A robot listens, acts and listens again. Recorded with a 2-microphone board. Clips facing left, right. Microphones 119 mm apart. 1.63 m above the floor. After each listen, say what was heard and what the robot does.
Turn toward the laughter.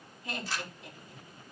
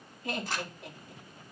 The laughter: about 60° right or 120° right. Turn 60° right.
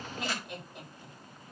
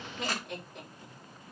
Facing the laughter.